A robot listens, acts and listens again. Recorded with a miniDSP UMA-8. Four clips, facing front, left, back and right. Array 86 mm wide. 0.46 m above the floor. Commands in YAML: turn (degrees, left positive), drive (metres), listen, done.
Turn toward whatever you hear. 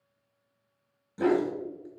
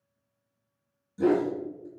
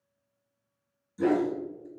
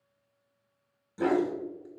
turn: -35
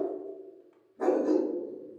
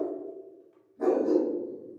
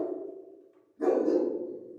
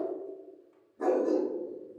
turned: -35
done: "Found it: a dog barking, straight ahead."